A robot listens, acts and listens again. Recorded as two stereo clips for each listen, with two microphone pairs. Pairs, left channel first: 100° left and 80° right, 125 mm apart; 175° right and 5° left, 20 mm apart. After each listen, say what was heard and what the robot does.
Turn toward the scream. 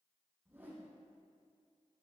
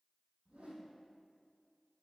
Keep listening.
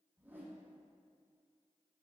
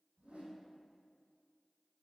Keep listening.
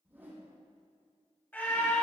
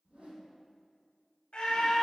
The scream: 170° left. Turn 170° left.
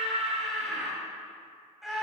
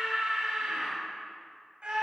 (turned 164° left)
Facing the scream, 2 to 4 m away.